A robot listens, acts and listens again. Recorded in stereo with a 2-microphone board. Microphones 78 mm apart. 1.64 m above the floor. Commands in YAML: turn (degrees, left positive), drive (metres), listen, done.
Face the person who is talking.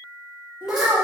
turn: -20
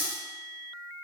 listen: true
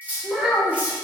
done: "Found it: a child speaking, straight ahead, 1 to 2 m away."